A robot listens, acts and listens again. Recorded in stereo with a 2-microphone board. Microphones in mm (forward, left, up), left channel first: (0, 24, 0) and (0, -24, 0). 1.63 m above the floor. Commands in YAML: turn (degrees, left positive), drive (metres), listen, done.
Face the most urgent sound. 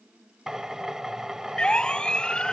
turn: 20
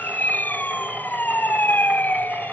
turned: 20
turn: 140
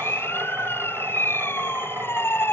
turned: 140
turn: 50
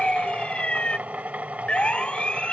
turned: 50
turn: 20
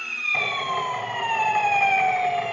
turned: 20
done: "Facing the siren."